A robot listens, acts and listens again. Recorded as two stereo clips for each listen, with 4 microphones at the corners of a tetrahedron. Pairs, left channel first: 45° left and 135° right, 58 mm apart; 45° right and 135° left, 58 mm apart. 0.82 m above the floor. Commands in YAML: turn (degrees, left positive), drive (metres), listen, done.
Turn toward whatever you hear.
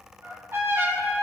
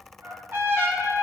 turn: 180
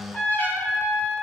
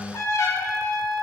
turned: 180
turn: -10
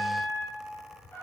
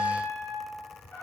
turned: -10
done: "Facing the trumpet, 1 to 2 m away."